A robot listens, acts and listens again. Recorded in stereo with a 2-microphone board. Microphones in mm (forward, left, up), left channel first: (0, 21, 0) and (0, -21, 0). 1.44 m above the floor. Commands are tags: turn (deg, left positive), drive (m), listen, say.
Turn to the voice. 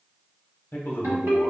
<turn deg="55"/>
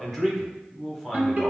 <say>Facing the man speaking, under 1 m away.</say>